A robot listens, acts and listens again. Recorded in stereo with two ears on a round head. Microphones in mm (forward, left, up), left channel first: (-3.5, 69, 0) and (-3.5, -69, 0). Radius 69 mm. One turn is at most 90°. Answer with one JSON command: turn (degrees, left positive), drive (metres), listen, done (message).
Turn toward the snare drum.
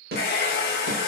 {"turn": -60}
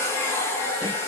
{"listen": true}
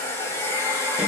{"listen": true}
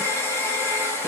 {"done": "I heard a snare drum, but can't make it out now. It was about straight ahead or 60° right."}